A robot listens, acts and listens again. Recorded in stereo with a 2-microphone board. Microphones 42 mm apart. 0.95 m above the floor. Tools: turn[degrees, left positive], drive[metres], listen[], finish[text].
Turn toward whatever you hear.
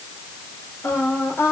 Thought: The singing: about 70° left or 110° left.
Action: turn[70]
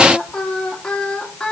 Thought: So it is at 10° left.
Action: turn[10]
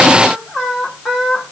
Thought: The singing is now 10° right.
Action: turn[-10]
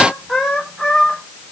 Action: finish[Facing the singing.]